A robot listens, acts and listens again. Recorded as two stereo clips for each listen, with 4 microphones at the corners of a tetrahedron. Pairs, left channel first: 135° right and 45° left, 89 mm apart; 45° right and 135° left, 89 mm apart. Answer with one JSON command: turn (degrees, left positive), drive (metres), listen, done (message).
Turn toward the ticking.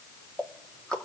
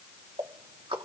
{"turn": 145}
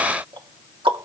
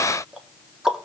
{"turn": 50}
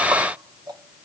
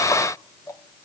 {"listen": true}
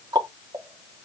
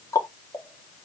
{"done": "Found it: ticking, straight ahead, 1 to 2 m away."}